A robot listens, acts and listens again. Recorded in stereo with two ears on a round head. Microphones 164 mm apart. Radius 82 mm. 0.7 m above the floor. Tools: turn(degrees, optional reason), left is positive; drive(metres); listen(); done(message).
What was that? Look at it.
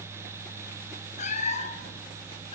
turn(degrees=40, reason="The cat meowing: about 40° left or 140° left.")
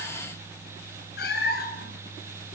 turn(degrees=120, reason="So it is at 120° left.")
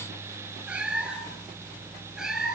done("Found it: a cat meowing, straight ahead, 2 to 4 m away.")